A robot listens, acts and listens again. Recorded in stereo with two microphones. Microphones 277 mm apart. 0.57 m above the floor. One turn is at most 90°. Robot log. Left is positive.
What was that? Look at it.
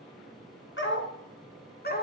note: The dog barking: about 30° left or 150° left.
cmd yaw +30
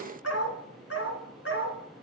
note: So it is at 135° left.
cmd yaw +90
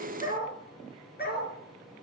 note: The dog barking is now 35° left.
cmd yaw +35
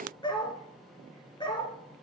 note: The dog barking is now 15° left.
cmd yaw +15
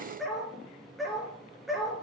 end: Facing the dog barking, 2 to 4 m away.